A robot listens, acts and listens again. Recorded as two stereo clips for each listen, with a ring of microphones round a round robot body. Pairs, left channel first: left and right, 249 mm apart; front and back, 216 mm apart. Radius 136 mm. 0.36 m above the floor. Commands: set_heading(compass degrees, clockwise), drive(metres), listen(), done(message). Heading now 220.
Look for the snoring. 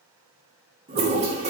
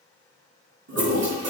listen()
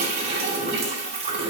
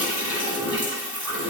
listen()
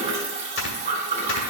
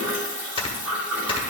set_heading(155)
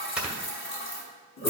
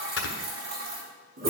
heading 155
done("Found it: snoring, straight ahead.")